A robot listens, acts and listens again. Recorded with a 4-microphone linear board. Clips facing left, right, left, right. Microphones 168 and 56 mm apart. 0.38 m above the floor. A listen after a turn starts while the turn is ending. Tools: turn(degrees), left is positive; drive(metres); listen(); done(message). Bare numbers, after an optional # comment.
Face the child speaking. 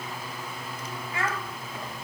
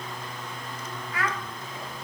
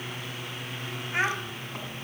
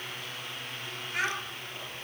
# The child speaking: about 25° left or 155° left.
turn(25)
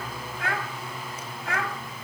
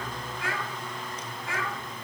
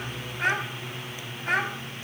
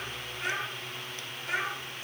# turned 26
# So it is at 115° left.
turn(115)
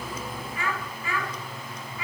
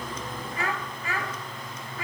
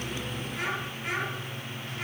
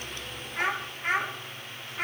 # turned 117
# The child speaking is now 50° right.
turn(-50)
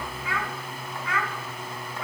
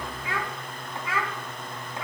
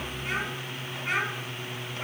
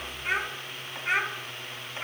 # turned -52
done("Facing the child speaking, 2 to 4 m away.")